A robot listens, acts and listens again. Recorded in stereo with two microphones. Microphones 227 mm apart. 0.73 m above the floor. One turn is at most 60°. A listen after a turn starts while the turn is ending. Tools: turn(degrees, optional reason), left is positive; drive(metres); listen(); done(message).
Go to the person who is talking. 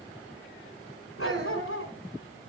turn(degrees=-50, reason="The child speaking: about 50° right or 130° right.")
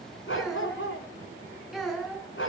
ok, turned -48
drive(metres=1.0)
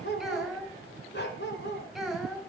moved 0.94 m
drive(metres=1.0)
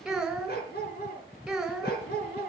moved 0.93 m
drive(metres=1.0)
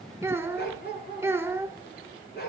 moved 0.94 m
turn(degrees=-10, reason="The child speaking is now 10° right.")
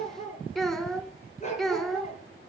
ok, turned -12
drive(metres=1.0)
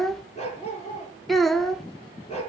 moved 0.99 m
drive(metres=1.0)
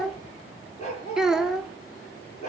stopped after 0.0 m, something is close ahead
done("I am next to the child speaking.")